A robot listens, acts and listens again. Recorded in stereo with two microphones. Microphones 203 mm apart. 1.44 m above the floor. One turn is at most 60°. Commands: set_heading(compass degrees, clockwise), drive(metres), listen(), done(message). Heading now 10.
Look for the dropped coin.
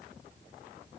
listen()
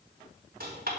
set_heading(70)
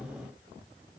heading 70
listen()
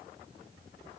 done("I heard a dropped coin, but can't make it out now. It was about straight ahead or 60° right.")